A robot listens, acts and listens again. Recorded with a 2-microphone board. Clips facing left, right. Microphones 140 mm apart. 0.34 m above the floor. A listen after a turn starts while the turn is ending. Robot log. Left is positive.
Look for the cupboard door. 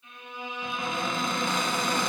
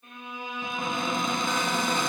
note: The cupboard door: about 20° right or 160° right.
cmd yaw -20
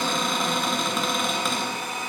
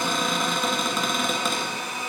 end: Facing the cupboard door, 1 to 2 m away.